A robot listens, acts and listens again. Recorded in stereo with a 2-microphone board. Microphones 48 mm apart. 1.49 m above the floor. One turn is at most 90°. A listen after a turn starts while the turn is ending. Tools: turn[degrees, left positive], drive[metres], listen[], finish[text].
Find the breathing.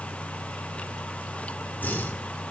Thought: The breathing: about 40° left or 140° left.
Action: turn[40]
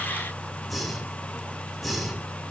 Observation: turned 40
Action: finish[Found it: breathing, straight ahead.]